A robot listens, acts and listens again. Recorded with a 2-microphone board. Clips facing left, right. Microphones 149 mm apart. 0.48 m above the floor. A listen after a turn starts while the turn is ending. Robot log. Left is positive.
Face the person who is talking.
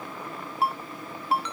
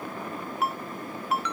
cmd idle
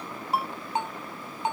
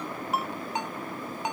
cmd idle
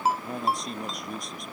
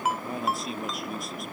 cmd yaw -30
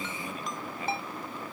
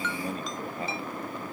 cmd idle
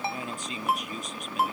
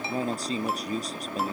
note: So it is at 145° right.
cmd yaw -145
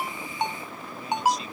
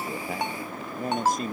note: The man speaking is now 50° right.
cmd yaw -50
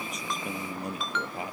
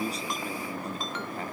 note: The man speaking is now 10° left.
cmd yaw +10
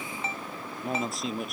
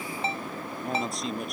end: Found it: a man speaking, straight ahead.